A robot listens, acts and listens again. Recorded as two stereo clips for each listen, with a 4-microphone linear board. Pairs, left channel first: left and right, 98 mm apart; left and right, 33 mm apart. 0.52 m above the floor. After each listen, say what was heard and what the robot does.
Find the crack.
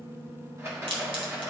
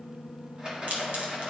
The crack: about 65° right or 115° right. Turn 65° right.
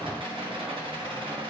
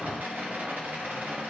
Keep listening.
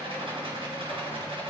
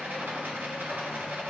I heard a crack, but can't make it out now. It was about straight ahead or 50° right.